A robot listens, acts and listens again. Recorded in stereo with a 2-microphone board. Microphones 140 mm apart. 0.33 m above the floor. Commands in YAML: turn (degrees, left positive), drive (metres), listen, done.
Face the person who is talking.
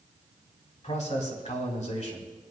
turn: 60
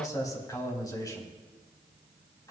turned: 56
turn: 30
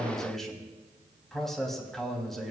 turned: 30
done: "Facing the man speaking, 2 to 4 m away."